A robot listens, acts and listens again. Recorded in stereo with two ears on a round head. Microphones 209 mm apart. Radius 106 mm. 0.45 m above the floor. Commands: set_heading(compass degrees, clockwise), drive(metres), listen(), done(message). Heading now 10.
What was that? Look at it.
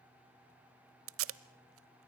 set_heading(70)
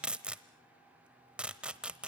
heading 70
done("Facing the tape being pulled.")